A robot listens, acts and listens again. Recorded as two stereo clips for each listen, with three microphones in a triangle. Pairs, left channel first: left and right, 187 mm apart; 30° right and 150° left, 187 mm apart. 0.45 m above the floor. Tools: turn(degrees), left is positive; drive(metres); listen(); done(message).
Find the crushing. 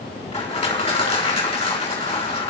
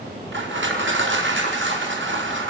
turn(degrees=150)
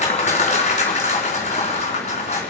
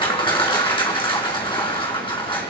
turn(degrees=35)
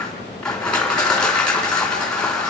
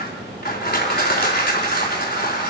done("Found it: crushing, straight ahead.")